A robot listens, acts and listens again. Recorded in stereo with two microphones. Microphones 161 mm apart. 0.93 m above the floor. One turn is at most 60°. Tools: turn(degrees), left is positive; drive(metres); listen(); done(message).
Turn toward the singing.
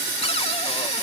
listen()
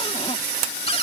listen()
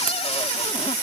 done("I can't make out singing to turn to.")